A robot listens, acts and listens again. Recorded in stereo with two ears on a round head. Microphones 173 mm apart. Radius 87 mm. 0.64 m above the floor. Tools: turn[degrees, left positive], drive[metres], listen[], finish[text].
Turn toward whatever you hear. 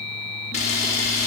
Thought: The camera shutter: about 40° left or 140° left.
Action: turn[40]
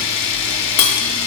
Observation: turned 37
Thought: So it is at 105° left.
Action: turn[105]
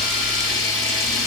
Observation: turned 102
Action: finish[Facing the camera shutter.]